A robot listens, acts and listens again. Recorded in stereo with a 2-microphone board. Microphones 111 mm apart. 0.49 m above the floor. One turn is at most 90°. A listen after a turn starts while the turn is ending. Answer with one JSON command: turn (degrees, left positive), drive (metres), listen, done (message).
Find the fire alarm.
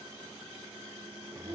{"listen": true}
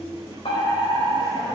{"turn": 55}
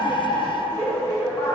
{"turn": 25}
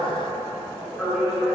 {"done": "Facing the fire alarm, 2 to 4 m away."}